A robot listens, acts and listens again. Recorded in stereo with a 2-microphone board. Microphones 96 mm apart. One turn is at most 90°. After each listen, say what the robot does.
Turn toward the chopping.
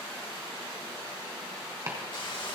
Turn 30° right.
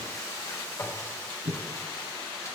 Turn 90° right.
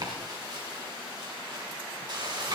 Turn 30° right.
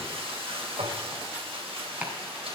Turn 15° right.
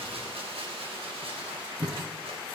Facing the chopping.